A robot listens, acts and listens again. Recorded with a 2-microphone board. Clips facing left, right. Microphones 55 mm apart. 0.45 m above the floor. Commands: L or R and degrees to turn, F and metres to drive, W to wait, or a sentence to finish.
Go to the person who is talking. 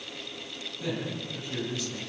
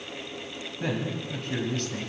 R50
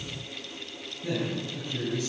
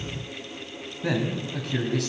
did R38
R90
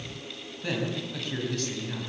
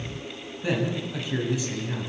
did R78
R15
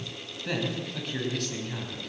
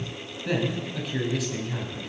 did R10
F1.0
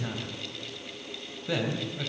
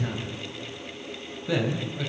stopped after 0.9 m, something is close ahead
Something is in my way. I am facing the man speaking but have not reached it.